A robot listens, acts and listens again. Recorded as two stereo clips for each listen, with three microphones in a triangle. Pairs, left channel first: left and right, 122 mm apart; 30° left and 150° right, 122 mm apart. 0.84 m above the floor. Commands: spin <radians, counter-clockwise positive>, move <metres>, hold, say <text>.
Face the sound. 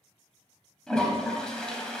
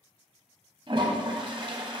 spin 3.05
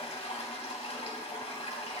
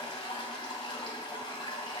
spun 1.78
spin 1.22
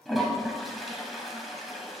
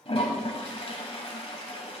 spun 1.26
say Facing the toilet flushing, 1 to 2 m away.